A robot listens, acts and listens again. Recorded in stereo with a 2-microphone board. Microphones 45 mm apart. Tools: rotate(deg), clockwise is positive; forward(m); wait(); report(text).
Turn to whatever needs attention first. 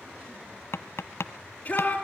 rotate(-30)
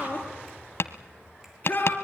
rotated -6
rotate(-40)
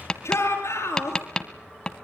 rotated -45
rotate(-95)
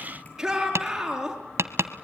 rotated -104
rotate(10)
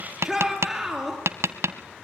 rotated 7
report("Facing the shout, over 4 m away.")